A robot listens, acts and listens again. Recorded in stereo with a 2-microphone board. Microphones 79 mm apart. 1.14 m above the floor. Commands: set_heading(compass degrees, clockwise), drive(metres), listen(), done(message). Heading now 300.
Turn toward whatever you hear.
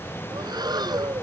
set_heading(10)
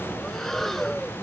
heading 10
done("Facing the breathing.")